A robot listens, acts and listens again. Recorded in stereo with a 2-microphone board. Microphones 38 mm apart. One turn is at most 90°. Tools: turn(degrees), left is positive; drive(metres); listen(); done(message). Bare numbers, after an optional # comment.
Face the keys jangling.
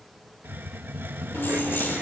turn(90)
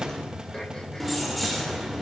done("Facing the keys jangling.")